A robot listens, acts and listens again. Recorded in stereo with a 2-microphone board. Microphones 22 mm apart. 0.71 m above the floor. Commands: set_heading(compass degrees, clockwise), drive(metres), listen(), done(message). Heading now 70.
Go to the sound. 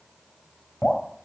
set_heading(15)
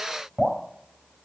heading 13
drive(1.0)
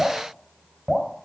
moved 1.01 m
drive(1.0)
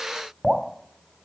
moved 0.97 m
set_heading(23)
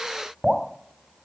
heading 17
drive(1.0)
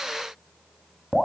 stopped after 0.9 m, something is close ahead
done("I am next to the dripping.")